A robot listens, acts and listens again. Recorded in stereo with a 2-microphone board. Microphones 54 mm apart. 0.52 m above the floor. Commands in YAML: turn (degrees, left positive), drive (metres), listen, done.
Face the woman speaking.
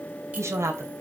turn: -65
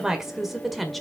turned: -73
done: "Facing the woman speaking, 1 to 2 m away."